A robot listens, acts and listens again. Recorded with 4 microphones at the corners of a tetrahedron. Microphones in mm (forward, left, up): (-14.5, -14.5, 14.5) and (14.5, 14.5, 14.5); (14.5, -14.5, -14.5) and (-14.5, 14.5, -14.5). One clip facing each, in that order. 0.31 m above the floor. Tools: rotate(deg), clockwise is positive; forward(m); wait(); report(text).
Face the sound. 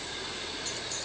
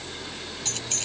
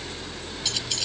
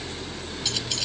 rotate(-50)
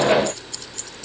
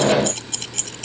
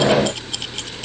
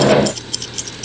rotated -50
rotate(-25)
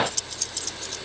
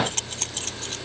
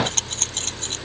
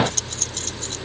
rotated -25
report("Found it: keys jangling, straight ahead.")